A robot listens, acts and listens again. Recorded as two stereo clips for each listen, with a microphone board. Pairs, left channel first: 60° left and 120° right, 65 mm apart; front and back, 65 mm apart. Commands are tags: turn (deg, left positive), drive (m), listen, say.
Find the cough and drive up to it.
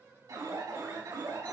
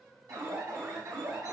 <listen/>
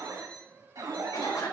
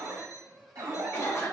<turn deg="55"/>
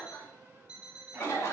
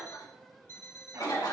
<drive m="1.0"/>
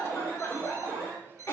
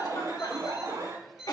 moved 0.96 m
<drive m="1.0"/>
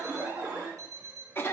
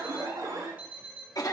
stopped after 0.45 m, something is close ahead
<say>I am next to the cough.</say>